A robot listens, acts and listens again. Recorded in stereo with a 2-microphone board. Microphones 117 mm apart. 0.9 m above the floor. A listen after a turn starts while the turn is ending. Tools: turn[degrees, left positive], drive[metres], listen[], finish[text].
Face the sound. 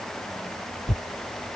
Thought: The tearing paper: about 50° left or 130° left.
Action: turn[50]
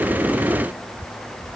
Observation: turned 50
Action: finish[Facing the tearing paper.]